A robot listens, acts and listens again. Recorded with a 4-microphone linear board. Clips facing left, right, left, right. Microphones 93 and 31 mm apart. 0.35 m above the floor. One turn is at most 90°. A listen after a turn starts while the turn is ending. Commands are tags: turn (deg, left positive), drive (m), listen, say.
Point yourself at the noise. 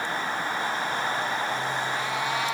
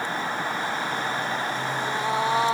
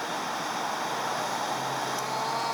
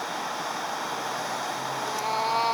<turn deg="-30"/>
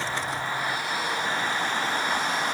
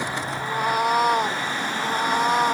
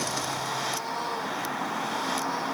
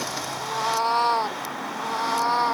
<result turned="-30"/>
<turn deg="-90"/>
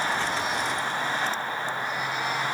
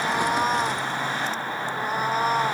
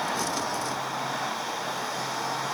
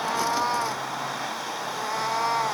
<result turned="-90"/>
<turn deg="-40"/>
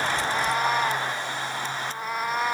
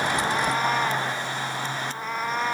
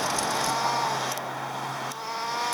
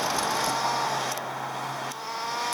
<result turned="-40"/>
<say>Facing the cat meowing.</say>